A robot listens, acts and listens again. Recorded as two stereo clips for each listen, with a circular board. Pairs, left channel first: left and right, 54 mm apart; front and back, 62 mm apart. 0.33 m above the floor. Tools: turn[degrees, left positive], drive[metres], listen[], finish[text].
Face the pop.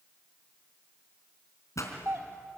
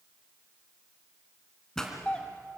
Thought: The pop: 80° left.
Action: turn[80]
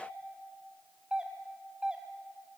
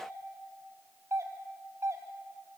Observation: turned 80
Action: finish[Facing where the pop came from. I can't hear it now.]